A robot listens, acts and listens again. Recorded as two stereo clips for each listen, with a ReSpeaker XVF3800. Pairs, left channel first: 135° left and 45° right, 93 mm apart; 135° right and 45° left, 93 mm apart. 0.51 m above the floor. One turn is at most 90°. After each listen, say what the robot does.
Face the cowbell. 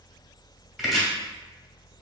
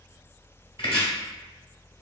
Keep listening.
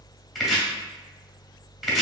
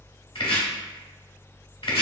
Keep listening.
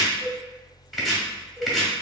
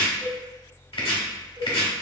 Facing the cowbell, 1 to 2 m away.